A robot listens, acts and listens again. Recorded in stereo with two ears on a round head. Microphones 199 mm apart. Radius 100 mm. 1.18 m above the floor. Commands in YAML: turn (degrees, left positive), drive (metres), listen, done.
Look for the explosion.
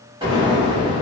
turn: -20
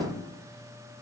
listen: true
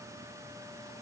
done: "I heard an explosion, but can't make it out now. It was about straight ahead or 140° right."